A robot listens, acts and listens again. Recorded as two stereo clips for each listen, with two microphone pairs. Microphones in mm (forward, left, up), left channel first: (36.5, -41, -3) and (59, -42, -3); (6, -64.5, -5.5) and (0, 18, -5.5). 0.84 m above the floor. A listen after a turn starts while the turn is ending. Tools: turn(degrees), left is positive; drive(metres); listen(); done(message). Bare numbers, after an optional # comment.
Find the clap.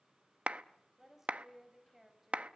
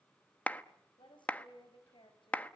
# The clap: 15° right.
turn(-15)
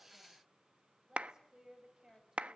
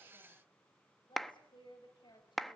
done("Facing the clap, under 1 m away.")